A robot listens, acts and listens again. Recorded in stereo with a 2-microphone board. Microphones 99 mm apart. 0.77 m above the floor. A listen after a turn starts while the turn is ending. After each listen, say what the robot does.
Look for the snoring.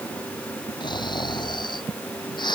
Turn 50° left.
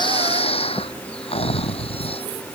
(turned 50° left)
Turn 80° left.
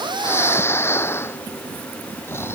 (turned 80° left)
Turn 25° left.
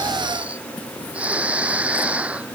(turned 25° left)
Turn 10° right.
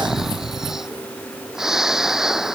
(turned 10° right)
Facing the snoring.